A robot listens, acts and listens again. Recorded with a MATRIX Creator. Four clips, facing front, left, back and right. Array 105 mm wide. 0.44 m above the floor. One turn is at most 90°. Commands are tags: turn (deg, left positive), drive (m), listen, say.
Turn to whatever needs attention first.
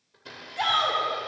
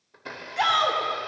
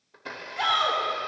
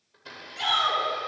<turn deg="85"/>
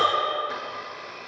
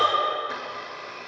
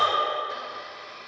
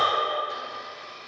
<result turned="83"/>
<say>Found it: a shout, straight ahead, 2 to 4 m away.</say>